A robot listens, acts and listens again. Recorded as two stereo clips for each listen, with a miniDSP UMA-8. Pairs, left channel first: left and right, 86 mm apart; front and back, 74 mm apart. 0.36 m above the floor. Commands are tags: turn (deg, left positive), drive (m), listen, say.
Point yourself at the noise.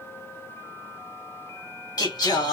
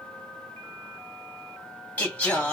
<turn deg="70"/>
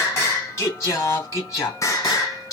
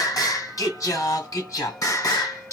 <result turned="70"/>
<turn deg="45"/>
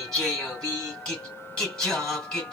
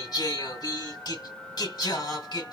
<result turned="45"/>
<turn deg="10"/>
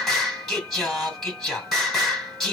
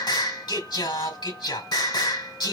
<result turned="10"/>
<say>Found it: singing, straight ahead, 2 to 4 m away.</say>